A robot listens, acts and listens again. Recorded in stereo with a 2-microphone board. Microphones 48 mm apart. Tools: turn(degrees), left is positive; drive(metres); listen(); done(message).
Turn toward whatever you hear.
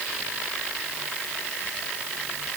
listen()
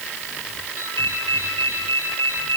turn(degrees=65)
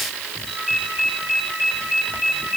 done("Found it: a ringtone, straight ahead.")